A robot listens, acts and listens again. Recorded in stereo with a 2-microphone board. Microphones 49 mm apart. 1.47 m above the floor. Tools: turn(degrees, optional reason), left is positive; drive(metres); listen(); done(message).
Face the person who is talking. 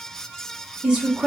turn(degrees=-25, reason="The woman speaking: about 25° right or 155° right.")
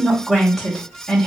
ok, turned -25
done("Found it: a woman speaking, straight ahead.")